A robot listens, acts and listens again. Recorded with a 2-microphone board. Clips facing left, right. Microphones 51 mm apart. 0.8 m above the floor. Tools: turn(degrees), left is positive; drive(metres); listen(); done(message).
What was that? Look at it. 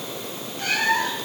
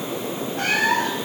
turn(degrees=-70)
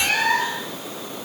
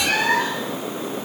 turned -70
done("Facing the cat meowing, over 4 m away.")